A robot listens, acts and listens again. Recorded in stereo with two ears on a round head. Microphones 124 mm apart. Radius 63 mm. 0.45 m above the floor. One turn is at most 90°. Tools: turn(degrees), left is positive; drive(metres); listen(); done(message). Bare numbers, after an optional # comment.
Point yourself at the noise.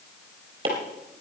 # The chopping: about 35° right or 145° right.
turn(-35)
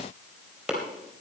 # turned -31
done("Found it: chopping, straight ahead, 2 to 4 m away.")